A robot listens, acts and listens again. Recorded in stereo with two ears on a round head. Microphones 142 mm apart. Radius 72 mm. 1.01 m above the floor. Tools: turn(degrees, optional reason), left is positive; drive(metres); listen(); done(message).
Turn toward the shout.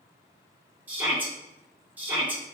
turn(degrees=-30)
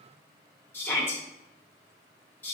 turn(degrees=20, reason="So it is at 20° left.")
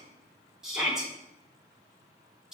done("Facing the shout.")